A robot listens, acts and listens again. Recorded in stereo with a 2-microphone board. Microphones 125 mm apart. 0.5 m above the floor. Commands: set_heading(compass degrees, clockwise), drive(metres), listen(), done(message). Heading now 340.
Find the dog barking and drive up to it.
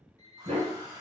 set_heading(50)
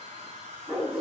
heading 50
drive(1.0)
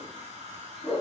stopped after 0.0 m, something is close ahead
done("Blocked. The dog barking is further on, straight ahead.")